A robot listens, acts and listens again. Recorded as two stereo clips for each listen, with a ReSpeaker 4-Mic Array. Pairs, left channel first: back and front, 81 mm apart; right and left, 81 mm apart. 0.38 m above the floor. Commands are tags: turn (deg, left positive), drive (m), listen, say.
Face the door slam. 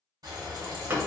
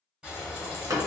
<turn deg="60"/>
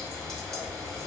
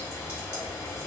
<say>Facing where the door slam came from. I can't hear it now.</say>